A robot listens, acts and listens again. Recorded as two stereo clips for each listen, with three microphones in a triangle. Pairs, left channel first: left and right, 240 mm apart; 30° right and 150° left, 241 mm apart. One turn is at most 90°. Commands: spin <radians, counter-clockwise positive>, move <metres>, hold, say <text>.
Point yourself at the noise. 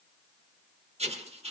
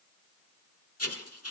spin -0.44
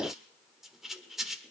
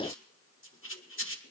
say Found it: writing, straight ahead.